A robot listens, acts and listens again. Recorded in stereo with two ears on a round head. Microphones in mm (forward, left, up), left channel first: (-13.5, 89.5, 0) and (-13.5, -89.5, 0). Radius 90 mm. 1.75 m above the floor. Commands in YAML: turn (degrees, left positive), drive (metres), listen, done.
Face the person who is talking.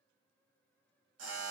listen: true
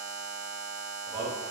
turn: 30
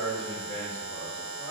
turn: 135
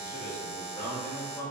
turn: 20
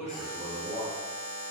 done: "Facing the man speaking, 1 to 2 m away."